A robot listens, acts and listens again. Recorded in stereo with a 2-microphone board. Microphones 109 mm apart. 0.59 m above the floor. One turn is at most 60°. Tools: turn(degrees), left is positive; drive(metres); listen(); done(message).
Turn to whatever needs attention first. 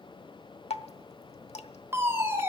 turn(degrees=-25)
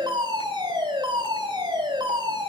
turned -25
turn(degrees=-60)
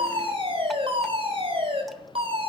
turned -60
turn(degrees=-60)
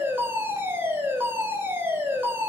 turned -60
turn(degrees=-25)
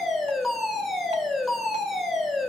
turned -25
done("Found it: a fire alarm, straight ahead, 2 to 4 m away.")